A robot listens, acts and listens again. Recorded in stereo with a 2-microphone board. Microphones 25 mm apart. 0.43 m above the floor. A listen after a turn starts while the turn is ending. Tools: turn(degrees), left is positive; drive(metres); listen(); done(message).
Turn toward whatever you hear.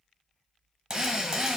turn(degrees=-25)
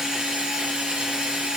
turn(degrees=-135)
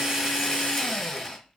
done("Facing the drill, 1 to 2 m away.")